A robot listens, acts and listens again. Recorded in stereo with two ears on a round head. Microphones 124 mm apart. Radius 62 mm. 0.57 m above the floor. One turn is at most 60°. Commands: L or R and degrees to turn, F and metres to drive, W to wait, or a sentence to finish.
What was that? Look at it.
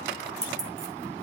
R25
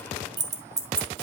R20
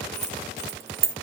R20
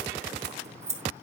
R25
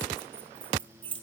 R40
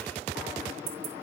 R60
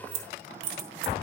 R60
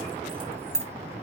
Facing the keys jangling, 2 to 4 m away.